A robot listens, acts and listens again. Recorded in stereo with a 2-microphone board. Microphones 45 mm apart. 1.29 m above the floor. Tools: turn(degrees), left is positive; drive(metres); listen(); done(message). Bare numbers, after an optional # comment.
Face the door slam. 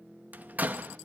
# The door slam: about 35° right or 145° right.
turn(-35)
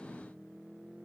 listen()
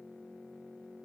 done("I heard a door slam, but can't make it out now. It was about straight ahead or 110° right.")